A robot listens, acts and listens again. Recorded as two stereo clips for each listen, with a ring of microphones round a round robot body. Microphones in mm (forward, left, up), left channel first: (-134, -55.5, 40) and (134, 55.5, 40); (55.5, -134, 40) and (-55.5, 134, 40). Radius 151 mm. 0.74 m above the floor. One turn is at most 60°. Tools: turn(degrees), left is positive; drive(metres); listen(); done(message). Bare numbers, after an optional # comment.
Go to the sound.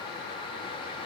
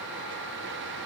listen()
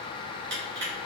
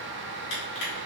# The crushing: 25° right.
turn(-25)
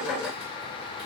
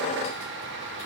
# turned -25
listen()
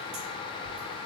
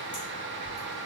listen()
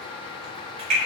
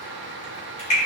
drive(1.0)
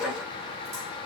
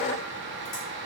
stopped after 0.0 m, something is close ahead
listen()
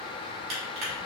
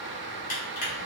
done("Something is in my way. I am facing the crushing but have not reached it.")